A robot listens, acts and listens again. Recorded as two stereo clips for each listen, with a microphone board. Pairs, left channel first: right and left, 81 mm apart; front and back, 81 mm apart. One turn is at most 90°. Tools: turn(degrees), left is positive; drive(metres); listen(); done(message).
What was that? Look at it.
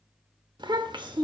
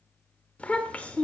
turn(degrees=70)
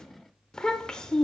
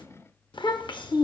turn(degrees=-10)
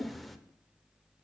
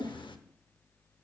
done("Facing the child speaking, under 1 m away.")